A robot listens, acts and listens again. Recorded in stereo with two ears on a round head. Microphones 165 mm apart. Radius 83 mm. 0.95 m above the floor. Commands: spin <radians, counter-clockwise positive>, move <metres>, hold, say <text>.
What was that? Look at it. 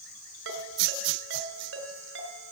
spin -1.57
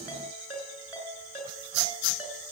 spin -0.17
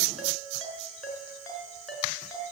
say Facing the ringtone, over 4 m away.